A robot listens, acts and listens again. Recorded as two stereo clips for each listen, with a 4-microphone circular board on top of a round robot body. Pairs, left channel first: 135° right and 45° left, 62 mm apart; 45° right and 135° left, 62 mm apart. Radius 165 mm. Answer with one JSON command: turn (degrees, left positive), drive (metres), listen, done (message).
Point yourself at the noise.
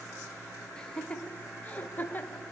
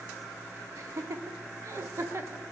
{"turn": 170}
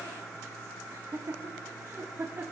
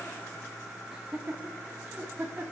{"turn": 75}
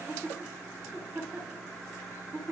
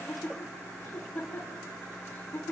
{"done": "Found it: laughter, straight ahead, 2 to 4 m away."}